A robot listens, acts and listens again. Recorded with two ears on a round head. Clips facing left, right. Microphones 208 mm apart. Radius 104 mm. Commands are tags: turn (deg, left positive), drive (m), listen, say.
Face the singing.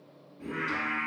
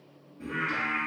<turn deg="-30"/>
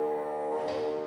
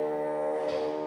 <turn deg="40"/>
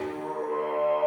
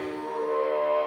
<turn deg="15"/>
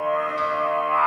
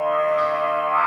<turn deg="15"/>
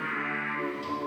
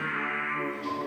<turn deg="10"/>
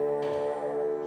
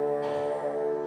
<say>Facing the singing, 2 to 4 m away.</say>